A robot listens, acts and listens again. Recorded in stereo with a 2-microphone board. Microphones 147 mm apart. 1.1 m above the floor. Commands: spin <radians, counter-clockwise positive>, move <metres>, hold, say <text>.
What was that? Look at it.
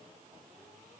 hold
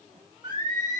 spin -0.44
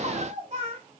spin -2.44
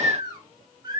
spin -0.52
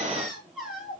say Facing the singing, 2 to 4 m away.